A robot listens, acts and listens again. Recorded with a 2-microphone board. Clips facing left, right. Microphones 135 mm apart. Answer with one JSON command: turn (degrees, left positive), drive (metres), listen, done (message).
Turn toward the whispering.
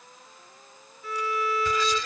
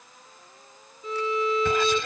{"turn": -60}
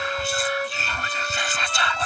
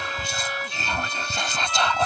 {"turn": -35}
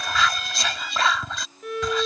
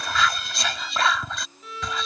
{"done": "Facing the whispering."}